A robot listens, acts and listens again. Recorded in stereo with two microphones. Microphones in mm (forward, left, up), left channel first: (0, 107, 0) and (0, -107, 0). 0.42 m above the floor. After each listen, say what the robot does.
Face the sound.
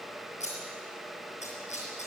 Turn 35° left.
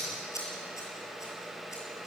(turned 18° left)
Turn 15° left.
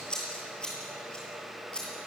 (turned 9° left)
Found it: scissors, straight ahead, over 4 m away.